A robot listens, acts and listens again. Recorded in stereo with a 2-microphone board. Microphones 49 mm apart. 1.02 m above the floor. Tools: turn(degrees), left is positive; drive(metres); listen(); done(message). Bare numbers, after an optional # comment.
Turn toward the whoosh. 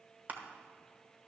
listen()
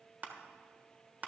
listen()
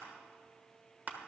done("I can't make out a whoosh to turn to.")